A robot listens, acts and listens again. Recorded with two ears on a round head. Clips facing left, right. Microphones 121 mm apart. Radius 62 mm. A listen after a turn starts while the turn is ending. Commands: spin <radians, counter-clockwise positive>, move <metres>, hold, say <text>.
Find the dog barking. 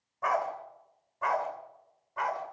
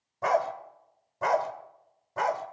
spin -0.79
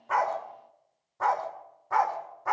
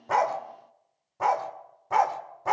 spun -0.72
spin -0.52
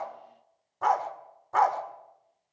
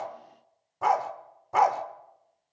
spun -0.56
spin -0.26
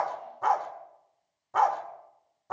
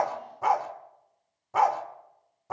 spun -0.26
spin -0.17
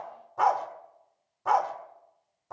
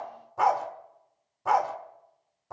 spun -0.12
say Facing the dog barking, 1 to 2 m away.